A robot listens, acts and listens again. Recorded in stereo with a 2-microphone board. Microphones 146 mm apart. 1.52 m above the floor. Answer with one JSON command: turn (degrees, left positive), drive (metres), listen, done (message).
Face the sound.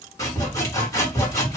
{"turn": 20}
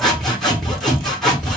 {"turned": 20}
{"done": "Facing the sawing, 1 to 2 m away."}